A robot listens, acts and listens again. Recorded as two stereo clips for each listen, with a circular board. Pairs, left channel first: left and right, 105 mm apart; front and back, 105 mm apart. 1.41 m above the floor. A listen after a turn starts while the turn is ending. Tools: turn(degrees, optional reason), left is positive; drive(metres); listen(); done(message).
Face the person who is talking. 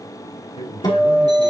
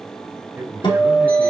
turn(degrees=110, reason="The man speaking: 110° left.")
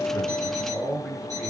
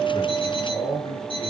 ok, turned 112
done("Facing the man speaking.")